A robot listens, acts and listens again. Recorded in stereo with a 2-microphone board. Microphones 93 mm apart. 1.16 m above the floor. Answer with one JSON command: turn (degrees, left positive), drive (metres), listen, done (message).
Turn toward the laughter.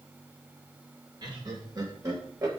{"turn": -40}
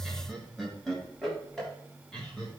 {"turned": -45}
{"turn": 10}
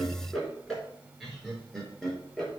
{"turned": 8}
{"done": "Found it: laughter, straight ahead."}